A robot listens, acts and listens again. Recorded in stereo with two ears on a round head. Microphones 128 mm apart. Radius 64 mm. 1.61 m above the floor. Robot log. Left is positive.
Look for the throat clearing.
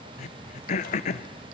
note: The throat clearing: about 50° left or 130° left.
cmd yaw +50
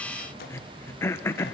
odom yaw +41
note: So it is at 20° left.
cmd yaw +20
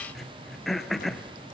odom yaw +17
end: Found it: throat clearing, straight ahead, under 1 m away.